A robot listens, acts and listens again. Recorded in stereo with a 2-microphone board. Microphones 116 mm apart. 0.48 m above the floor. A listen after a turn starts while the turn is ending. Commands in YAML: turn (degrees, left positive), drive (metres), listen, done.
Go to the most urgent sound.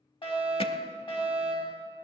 turn: 50
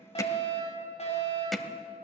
turn: 75
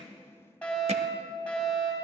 turn: 10
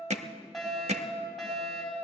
drive: 1.0
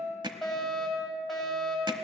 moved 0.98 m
drive: 1.0
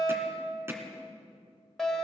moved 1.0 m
drive: 1.0
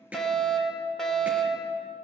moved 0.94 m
drive: 1.0
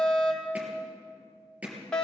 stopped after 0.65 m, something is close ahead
turn: 15
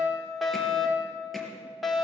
done: "I am next to the fire alarm."